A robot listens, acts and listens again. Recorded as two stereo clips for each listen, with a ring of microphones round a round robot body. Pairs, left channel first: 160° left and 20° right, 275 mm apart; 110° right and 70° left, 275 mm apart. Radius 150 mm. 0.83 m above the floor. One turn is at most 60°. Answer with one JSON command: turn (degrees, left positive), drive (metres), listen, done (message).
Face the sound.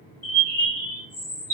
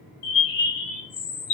{"turn": -60}
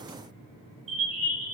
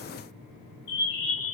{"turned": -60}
{"turn": -60}
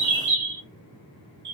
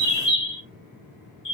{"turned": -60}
{"turn": -40}
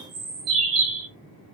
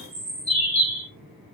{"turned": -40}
{"done": "Found it: a bird, straight ahead, 1 to 2 m away."}